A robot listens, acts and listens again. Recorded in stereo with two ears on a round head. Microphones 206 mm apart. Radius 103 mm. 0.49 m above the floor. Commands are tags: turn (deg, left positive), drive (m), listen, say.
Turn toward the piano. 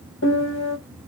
<turn deg="60"/>
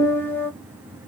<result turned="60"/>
<turn deg="10"/>
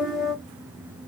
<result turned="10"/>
<say>Found it: a piano, straight ahead.</say>